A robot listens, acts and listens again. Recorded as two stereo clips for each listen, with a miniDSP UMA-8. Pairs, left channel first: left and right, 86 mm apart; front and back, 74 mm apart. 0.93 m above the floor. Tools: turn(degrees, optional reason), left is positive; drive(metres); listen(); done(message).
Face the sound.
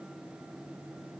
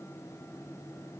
listen()
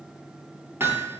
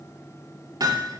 turn(degrees=-155, reason="The hammering: 155° right.")
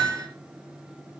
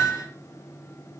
turn(degrees=-40, reason="The hammering is now 40° right.")
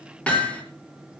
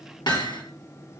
turn(degrees=15, reason="The hammering is now 15° left.")
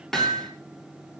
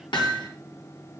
done("Facing the hammering, over 4 m away.")